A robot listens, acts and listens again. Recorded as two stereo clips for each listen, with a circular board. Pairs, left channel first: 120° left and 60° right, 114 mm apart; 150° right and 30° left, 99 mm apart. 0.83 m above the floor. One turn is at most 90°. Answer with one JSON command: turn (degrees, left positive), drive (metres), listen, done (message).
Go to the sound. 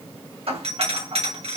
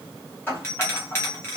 {"turn": -85}
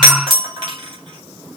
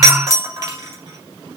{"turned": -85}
{"turn": -20}
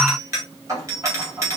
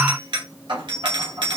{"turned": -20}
{"drive": 1.0}
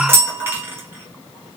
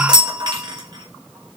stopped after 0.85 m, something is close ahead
{"done": "I am next to the doorbell."}